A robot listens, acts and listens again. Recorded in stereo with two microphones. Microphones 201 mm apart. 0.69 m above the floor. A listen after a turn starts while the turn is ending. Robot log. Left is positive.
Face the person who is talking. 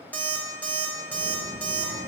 note: The child speaking: about 45° right or 135° right.
cmd yaw -45
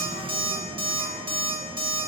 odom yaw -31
end: Facing the child speaking.